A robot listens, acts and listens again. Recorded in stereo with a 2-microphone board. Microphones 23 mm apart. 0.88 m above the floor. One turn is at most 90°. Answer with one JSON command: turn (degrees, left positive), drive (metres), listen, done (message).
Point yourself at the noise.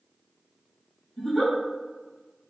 {"turn": 30}
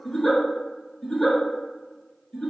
{"turn": 90}
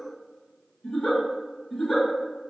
{"turn": 20}
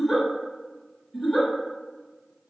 {"turn": 10}
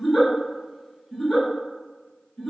{"done": "Facing the giggle, 1 to 2 m away."}